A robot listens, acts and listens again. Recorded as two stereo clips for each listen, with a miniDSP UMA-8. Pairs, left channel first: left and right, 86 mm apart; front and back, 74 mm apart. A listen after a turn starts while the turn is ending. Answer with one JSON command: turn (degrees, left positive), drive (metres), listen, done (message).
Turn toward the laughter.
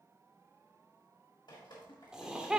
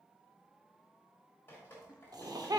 {"turn": -170}
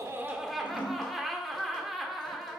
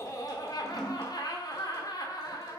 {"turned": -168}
{"done": "Found it: laughter, straight ahead."}